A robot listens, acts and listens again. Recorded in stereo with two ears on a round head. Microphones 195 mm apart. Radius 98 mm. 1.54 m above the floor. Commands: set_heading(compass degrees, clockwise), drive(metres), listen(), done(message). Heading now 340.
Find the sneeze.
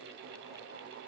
listen()
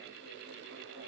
listen()
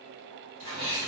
set_heading(70)
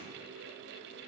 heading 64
done("I heard a sneeze from this way, but can't make it out now.")